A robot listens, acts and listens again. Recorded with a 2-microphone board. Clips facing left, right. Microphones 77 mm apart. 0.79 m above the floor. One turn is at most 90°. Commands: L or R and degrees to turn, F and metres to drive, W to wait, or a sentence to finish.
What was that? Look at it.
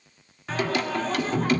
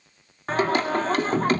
R40
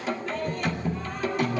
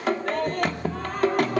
R90
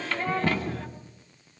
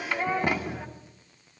R20
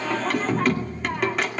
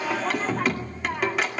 Facing the singing, 2 to 4 m away.